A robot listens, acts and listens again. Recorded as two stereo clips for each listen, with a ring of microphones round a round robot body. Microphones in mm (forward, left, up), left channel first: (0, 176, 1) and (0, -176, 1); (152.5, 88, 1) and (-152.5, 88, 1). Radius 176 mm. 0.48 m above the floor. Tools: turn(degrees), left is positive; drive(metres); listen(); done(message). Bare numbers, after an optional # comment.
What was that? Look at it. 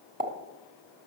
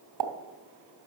# The pop: 155° right.
turn(-155)
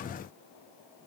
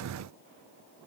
done("Facing where the pop came from. I can't hear it now.")